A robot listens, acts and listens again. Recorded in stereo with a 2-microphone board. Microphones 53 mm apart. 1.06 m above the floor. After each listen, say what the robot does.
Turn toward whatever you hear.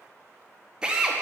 Turn 30° right.
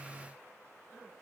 Keep listening.
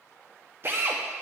Turn 135° right.
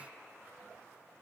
Keep listening.
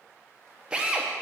Turn 20° right.
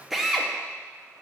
Facing the drill.